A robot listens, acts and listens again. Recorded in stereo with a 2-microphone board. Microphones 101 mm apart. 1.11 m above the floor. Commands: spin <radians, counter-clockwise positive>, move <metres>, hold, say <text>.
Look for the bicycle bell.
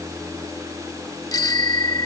spin 0.70
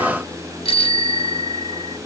spin 1.75
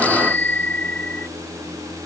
spin 0.26
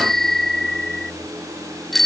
say Facing the bicycle bell.